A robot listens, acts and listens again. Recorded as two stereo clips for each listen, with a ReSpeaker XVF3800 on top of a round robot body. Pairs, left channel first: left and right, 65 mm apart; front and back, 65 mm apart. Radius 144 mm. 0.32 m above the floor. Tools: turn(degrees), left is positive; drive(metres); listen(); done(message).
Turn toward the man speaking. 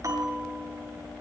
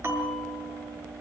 listen()
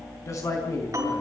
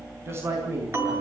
turn(degrees=135)
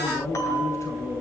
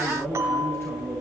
listen()
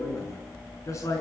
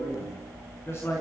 turn(degrees=50)
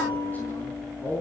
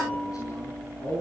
turn(degrees=30)
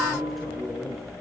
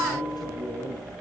done("Found it: a man speaking, straight ahead, over 4 m away.")